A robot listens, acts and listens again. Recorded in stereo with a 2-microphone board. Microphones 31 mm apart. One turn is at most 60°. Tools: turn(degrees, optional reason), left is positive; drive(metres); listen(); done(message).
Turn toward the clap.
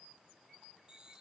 listen()
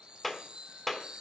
turn(degrees=30)
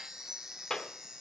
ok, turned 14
turn(degrees=60, reason="So it is at 165° left.")
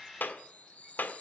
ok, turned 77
turn(degrees=60, reason="The clap is now 85° left.")
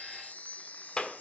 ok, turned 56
turn(degrees=30, reason="The clap is now 30° left.")
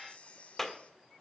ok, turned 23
turn(degrees=10, reason="The clap is now 10° left.")
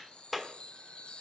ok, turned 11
done("Found it: a clap, straight ahead, 1 to 2 m away.")